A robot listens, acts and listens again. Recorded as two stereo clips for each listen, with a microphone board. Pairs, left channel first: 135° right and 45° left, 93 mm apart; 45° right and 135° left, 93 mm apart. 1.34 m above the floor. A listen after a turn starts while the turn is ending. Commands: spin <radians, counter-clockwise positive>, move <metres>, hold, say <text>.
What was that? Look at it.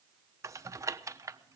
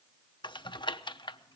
spin -0.17
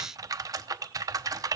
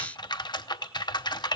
say Found it: typing on a keyboard, straight ahead.